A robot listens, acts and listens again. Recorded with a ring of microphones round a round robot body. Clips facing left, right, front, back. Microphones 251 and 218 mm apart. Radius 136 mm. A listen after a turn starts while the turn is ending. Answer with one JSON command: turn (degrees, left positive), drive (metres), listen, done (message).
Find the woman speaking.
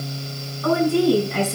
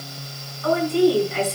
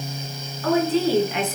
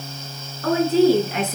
{"turn": 130}
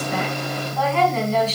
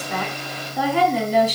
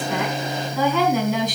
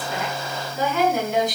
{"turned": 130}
{"turn": -15}
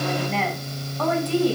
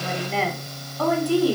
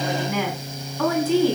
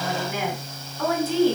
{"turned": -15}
{"turn": -10}
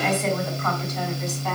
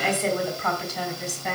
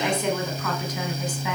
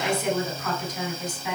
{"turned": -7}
{"done": "Facing the woman speaking, 2 to 4 m away."}